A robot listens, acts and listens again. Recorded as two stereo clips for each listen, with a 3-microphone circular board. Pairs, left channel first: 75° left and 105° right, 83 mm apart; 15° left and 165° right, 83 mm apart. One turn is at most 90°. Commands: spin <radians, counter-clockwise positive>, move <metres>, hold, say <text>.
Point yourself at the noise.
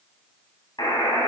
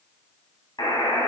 spin 0.79
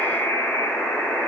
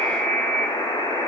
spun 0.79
say Found it: a buzzer, straight ahead, 2 to 4 m away.